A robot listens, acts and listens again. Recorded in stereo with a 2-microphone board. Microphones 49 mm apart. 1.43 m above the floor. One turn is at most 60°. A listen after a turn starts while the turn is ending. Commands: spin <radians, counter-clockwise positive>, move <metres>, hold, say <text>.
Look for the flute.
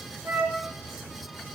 spin -0.96
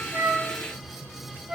spin -0.52
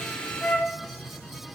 spin 0.35
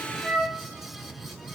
say Facing the flute, 1 to 2 m away.